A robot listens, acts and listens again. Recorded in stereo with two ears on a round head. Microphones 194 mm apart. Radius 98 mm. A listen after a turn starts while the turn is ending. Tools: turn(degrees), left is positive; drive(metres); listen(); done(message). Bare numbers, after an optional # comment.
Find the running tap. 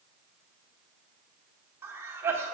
listen()
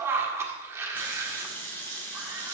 turn(30)
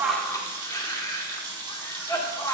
# So it is at 20° right.
turn(-20)
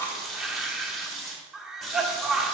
done("Facing the running tap.")